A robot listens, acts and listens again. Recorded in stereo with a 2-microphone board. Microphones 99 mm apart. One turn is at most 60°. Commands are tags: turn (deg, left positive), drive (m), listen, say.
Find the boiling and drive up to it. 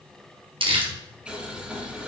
<turn deg="-30"/>
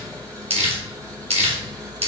<turn deg="-60"/>
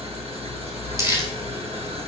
<turn deg="-60"/>
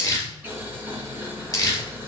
<turn deg="-20"/>
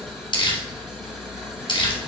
<drive m="1.0"/>
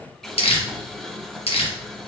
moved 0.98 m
<drive m="1.0"/>
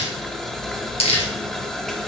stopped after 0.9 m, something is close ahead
<say>I am next to the boiling.</say>